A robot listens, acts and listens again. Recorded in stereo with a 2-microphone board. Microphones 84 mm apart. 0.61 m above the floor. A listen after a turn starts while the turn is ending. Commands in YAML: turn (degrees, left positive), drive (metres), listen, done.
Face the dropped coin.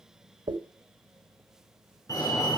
turn: -60
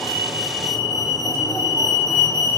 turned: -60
listen: true
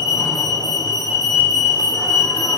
done: "I heard a dropped coin, but can't make it out now. It was about straight ahead or 60° right."